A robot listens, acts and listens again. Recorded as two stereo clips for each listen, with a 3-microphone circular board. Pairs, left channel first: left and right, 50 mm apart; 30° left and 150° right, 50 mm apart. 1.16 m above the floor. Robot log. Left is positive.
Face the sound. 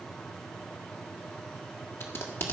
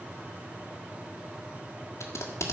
note: The tape being pulled: 55° left.
cmd yaw +55
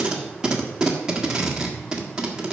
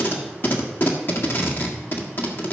note: The tape being pulled is now 15° right.
cmd yaw -15
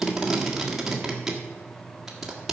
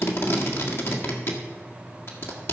end: Found it: tape being pulled, straight ahead.